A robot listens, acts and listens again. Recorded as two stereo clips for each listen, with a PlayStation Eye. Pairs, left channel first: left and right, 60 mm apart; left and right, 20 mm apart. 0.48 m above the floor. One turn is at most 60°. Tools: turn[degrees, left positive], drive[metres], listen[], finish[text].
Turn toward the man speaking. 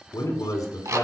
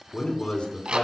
Action: turn[60]
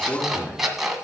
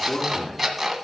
Thought: So it is at 40° left.
Action: turn[40]
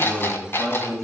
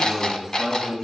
Action: finish[Facing the man speaking.]